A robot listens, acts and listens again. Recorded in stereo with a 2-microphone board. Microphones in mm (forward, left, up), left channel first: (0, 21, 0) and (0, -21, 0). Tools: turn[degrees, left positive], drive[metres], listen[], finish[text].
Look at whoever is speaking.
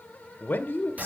Thought: The man speaking: about 45° left or 135° left.
Action: turn[45]
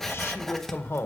Thought: So it is at 90° left.
Action: turn[90]
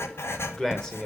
Thought: The man speaking is now 15° left.
Action: turn[15]
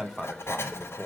Action: finish[Found it: a man speaking, straight ahead.]